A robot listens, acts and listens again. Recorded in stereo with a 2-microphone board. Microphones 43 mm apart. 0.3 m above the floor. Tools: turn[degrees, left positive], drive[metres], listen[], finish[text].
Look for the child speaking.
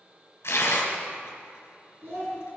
Thought: The child speaking: about 60° right or 120° right.
Action: turn[-60]
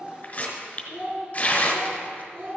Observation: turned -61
Thought: So it is at 65° right.
Action: turn[-65]
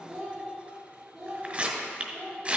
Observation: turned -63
Thought: The child speaking is now 15° right.
Action: turn[-15]
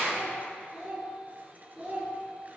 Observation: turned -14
Action: finish[Found it: a child speaking, straight ahead.]